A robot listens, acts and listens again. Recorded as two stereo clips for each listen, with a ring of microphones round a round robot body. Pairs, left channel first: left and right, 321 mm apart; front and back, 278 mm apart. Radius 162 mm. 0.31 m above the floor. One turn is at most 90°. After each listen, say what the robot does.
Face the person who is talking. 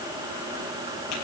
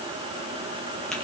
Keep listening.
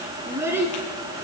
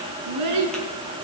Turn 90° right.
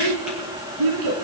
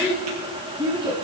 Turn 90° right.
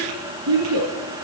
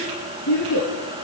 Turn 45° right.
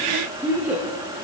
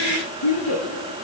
Facing the child speaking, 2 to 4 m away.